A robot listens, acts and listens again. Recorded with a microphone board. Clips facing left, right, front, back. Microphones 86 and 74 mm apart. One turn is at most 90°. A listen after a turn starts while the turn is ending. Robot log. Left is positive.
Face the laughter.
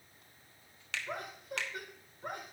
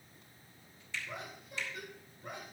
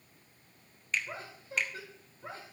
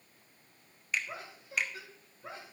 note: The laughter: 55° left.
cmd yaw +55
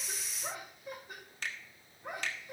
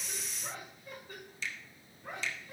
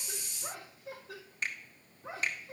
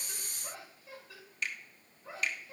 note: The laughter is now 15° left.
cmd yaw +15
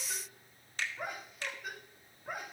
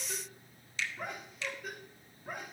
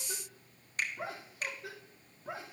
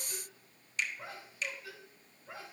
end: Found it: laughter, straight ahead, 2 to 4 m away.